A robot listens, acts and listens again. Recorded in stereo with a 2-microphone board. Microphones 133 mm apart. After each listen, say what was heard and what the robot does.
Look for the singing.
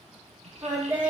The singing: about 20° right or 160° right. Turn 20° right.
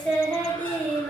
So it is at 15° left. Turn 15° left.
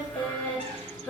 The singing is now 15° left. Turn 15° left.
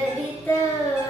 The singing is now 20° left. Turn 20° left.
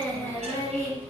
The singing is now 20° left. Turn 20° left.
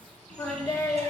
The singing is now 25° left. Turn 25° left.
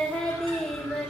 Facing the singing, 1 to 2 m away.